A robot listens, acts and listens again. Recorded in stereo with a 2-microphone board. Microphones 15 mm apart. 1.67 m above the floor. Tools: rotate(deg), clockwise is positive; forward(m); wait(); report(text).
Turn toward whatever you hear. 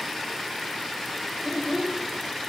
rotate(55)
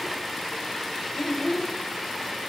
report("Found it: a child speaking, straight ahead.")